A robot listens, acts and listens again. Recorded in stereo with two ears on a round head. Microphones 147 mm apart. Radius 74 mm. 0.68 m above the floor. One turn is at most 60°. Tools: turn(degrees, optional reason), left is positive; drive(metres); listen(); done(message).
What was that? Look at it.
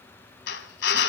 turn(degrees=60)
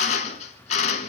turn(degrees=40, reason="So it is at 40° left.")
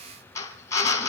turn(degrees=20, reason="The drill is now 20° left.")
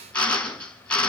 done("Found it: a drill, straight ahead.")